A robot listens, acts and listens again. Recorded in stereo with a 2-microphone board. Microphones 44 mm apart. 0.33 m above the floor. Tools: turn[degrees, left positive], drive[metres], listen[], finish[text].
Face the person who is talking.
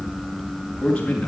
Thought: The man speaking: about 25° left or 155° left.
Action: turn[25]
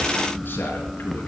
Action: listen[]
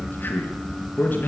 Thought: So it is at 140° left.
Action: turn[140]
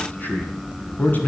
Thought: The man speaking is now 45° left.
Action: turn[45]
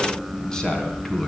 Thought: The man speaking is now 15° left.
Action: turn[15]
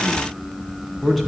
Action: finish[Found it: a man speaking, straight ahead.]